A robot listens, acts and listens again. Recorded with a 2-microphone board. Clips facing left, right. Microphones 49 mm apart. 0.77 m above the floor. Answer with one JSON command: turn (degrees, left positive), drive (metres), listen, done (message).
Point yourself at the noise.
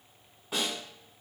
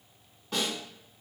{"turn": 30}
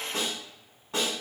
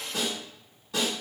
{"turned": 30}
{"turn": 140}
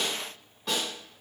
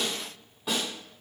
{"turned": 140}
{"turn": -10}
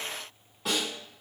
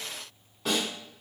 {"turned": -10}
{"done": "Facing the snare drum."}